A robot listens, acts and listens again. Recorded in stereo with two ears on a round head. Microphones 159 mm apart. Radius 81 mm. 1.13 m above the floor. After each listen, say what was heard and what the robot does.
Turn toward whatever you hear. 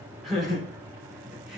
Turn 30° right.
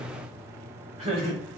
So it is at 140° right. Turn 140° right.
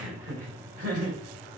The laughter is now 50° right. Turn 50° right.
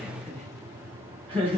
The laughter is now 10° left. Turn 10° left.
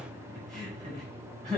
Facing the laughter, over 4 m away.